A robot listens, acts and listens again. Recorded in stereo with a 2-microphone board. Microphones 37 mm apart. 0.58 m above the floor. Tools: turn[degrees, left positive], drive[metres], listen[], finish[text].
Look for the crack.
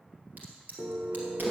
Thought: The crack: about 55° right or 125° right.
Action: turn[-55]
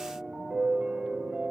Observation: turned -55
Action: listen[]
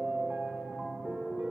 Action: finish[I heard a crack, but can't make it out now. It was about straight ahead or 70° right.]